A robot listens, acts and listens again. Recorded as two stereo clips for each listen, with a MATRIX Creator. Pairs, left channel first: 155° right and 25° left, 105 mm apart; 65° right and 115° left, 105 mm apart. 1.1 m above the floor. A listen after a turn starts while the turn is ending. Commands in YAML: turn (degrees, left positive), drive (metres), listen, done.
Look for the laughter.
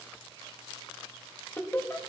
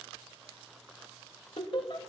turn: -100
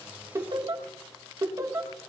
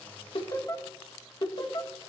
turn: -35
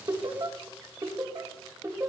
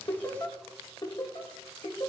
turn: -35
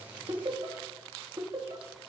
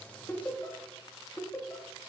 done: "Facing the laughter, 2 to 4 m away."